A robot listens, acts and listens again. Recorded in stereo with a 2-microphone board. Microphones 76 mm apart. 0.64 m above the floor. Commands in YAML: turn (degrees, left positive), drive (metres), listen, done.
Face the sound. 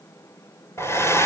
turn: 35
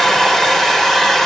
done: "Facing the hair dryer."